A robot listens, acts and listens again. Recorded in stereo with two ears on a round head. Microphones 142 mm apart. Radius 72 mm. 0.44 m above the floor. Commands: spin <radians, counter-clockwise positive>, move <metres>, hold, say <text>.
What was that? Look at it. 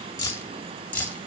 spin 0.52
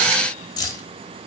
spin 2.71
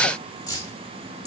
spin 0.44
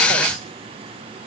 hold
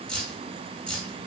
say Facing the keys jangling, over 4 m away.